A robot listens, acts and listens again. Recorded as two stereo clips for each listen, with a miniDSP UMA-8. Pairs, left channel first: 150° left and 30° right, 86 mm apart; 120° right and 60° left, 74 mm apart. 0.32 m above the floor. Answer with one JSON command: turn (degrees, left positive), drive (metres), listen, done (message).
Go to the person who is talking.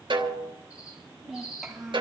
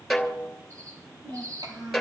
{"turn": 60}
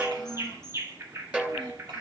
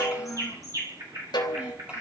{"listen": true}
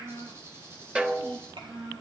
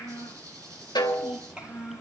{"turn": -15}
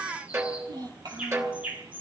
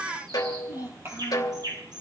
{"drive": 1.0}
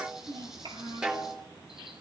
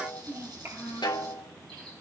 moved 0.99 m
{"drive": 1.0}
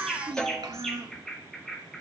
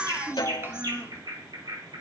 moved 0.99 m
{"drive": 1.0}
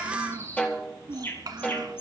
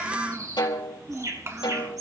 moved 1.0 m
{"turn": 10}
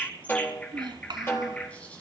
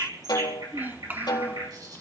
{"drive": 1.0}
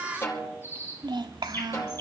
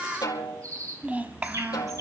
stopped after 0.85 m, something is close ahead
{"done": "I am next to the child speaking."}